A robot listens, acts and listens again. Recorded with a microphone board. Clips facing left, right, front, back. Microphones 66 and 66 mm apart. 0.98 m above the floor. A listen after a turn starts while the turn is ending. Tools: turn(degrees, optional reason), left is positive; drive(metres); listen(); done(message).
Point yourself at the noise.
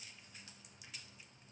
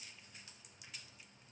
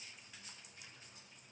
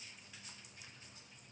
listen()
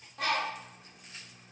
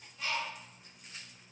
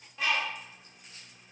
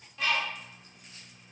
turn(degrees=75, reason="The bird: 75° left.")
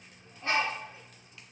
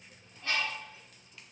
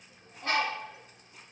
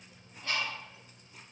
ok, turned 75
turn(degrees=25, reason="The bird is now 25° left.")
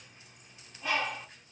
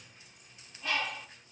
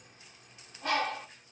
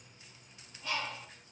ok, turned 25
done("Facing the bird.")